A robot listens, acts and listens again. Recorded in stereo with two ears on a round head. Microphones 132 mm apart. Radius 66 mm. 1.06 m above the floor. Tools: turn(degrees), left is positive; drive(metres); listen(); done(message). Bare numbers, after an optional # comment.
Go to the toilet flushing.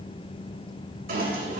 # The toilet flushing: about 70° right or 110° right.
turn(-70)
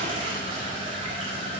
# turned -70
# So it is at 35° right.
turn(-35)
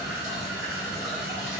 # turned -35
drive(1.0)
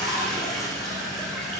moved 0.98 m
drive(1.0)
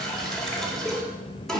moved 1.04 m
drive(1.0)
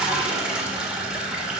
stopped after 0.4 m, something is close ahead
done("I am next to the toilet flushing.")